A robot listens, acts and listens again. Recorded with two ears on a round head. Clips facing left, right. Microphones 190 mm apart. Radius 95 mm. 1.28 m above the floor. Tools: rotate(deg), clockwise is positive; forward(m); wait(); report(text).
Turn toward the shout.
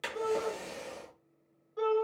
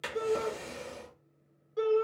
rotate(35)
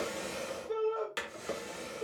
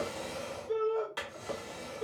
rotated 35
report("Facing the shout.")